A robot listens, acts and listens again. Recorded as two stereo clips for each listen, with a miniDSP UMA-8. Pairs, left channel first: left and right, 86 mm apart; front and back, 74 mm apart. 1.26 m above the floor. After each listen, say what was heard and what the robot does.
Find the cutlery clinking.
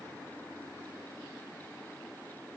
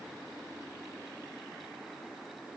Keep listening.
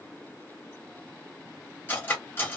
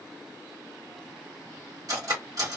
The cutlery clinking: 150° left. Turn 150° left.
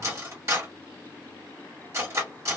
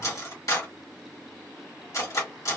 The cutlery clinking is now 40° right. Turn 40° right.
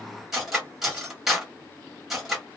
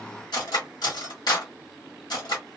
Facing the cutlery clinking.